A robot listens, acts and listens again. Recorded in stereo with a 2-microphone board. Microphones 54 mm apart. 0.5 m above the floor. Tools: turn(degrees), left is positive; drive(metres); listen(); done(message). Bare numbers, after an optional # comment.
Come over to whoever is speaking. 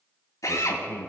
# The man speaking: about 45° left or 135° left.
turn(45)
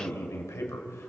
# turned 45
# So it is at 85° left.
turn(85)
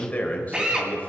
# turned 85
# The man speaking is now 30° left.
turn(30)
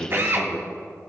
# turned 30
drive(1.0)
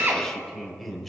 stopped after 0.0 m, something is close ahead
done("Something is in my way. I am facing the man speaking but have not reached it.")